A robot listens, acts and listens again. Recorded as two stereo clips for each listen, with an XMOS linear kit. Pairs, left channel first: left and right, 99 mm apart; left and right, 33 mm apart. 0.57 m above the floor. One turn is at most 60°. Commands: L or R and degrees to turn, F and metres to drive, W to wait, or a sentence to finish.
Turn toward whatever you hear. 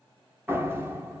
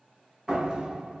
R20
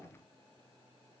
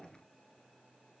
W
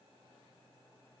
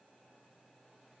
I heard a door slam, but can't make it out now. It was about straight ahead or 140° right.